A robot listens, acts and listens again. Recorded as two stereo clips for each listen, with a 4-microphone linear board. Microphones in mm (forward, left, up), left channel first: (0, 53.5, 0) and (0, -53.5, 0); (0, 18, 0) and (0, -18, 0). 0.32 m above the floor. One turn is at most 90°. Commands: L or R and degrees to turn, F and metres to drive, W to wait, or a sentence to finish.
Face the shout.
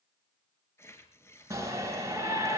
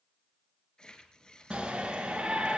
R30
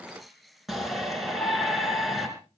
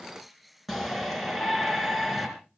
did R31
Facing the shout.